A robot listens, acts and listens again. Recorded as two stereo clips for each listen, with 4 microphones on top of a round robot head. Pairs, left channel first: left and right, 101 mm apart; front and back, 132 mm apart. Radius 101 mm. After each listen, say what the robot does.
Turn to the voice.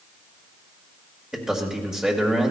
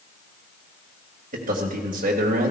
Turn 170° right.
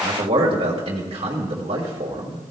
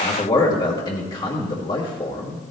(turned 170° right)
Turn 60° right.
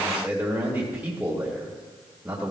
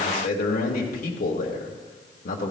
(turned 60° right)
Turn 15° right.
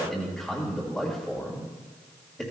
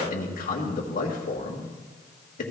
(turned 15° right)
Facing the man speaking, 1 to 2 m away.